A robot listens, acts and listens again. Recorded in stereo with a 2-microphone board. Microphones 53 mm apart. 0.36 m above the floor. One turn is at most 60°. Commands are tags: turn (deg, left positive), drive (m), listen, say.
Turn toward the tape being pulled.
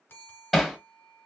<listen/>
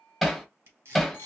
<turn deg="-55"/>
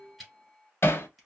<say>Facing the tape being pulled.</say>